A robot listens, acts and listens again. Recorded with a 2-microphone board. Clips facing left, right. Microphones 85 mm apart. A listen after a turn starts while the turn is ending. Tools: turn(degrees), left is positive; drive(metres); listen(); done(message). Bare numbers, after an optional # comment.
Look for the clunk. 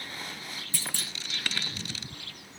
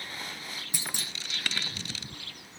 # The clunk: about 20° right or 160° right.
turn(-20)
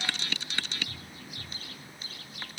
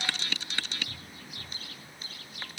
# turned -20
listen()
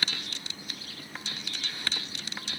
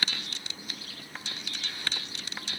done("I heard a clunk, but can't make it out now. It was about straight ahead or 140° right.")